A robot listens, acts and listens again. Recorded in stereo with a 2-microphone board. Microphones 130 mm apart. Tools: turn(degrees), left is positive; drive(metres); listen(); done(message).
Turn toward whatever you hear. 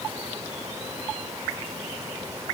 listen()
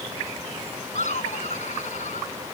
turn(degrees=70)
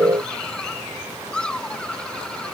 done("Facing the laughter.")